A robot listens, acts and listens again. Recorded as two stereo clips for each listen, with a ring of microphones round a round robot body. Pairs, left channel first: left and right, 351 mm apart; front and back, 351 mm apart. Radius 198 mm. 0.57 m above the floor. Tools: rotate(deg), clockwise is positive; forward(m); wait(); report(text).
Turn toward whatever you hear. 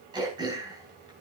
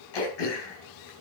rotate(10)
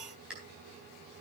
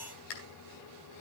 report("Found it: throat clearing, straight ahead, 2 to 4 m away.")